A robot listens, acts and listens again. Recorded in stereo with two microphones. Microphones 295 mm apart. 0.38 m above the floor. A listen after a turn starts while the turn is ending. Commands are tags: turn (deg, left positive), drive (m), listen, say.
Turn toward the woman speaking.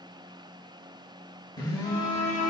<listen/>
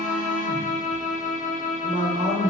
<turn deg="-20"/>
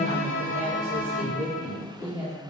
<turn deg="-30"/>
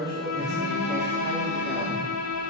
<listen/>
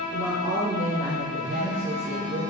<turn deg="-145"/>
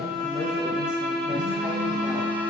<listen/>
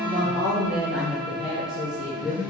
<say>Found it: a woman speaking, straight ahead.</say>